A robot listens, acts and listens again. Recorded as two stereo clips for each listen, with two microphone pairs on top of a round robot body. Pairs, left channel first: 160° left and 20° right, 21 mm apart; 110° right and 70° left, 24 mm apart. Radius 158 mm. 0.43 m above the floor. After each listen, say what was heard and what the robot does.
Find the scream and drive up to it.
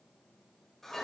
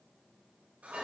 Keep listening.
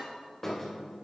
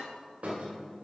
Keep listening.
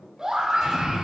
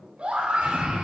The scream: 35° left. Turn 35° left.
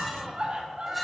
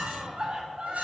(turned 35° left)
The scream is now 15° left. Turn 15° left.
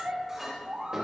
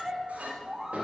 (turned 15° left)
Drive 1.0 m forward.
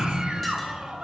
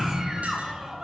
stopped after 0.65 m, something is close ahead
I am next to the scream.